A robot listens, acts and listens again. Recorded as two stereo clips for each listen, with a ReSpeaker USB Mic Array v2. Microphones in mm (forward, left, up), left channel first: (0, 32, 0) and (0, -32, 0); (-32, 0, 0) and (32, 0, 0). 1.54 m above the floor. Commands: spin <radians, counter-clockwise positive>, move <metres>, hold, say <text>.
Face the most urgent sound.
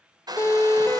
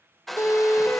spin 2.27
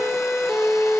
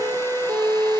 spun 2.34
say Found it: a siren, straight ahead.